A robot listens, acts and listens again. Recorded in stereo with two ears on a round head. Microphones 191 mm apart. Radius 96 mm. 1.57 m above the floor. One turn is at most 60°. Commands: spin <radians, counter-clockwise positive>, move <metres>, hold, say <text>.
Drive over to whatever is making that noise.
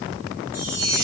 spin -0.52
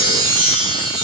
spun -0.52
spin -1.05
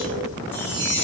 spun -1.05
spin -1.05
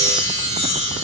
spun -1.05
spin -0.35
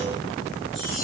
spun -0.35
hold
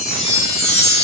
move 1.0
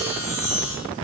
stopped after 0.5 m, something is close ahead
say Blocked. The chime is further on, straight ahead.